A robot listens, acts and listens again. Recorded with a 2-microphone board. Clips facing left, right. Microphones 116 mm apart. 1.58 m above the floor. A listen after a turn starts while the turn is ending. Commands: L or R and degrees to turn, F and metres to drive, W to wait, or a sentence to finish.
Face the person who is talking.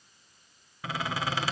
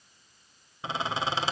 W
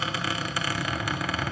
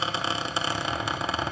W
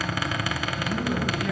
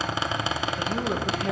R45
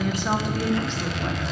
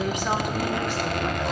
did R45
R10
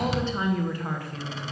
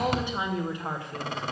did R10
R25
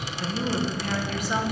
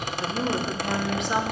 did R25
R25
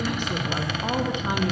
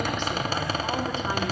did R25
L15
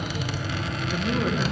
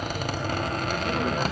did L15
Found it: a woman speaking, straight ahead, 1 to 2 m away.